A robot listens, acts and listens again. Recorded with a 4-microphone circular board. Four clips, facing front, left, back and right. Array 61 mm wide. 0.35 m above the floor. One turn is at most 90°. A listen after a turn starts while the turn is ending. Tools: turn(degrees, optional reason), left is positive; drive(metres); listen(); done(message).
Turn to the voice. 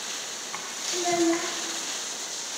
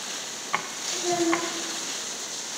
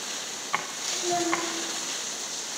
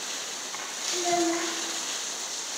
turn(degrees=-30, reason="The child speaking: 30° right.")
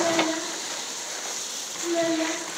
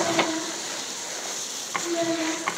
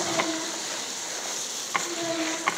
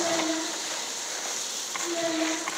done("Found it: a child speaking, straight ahead.")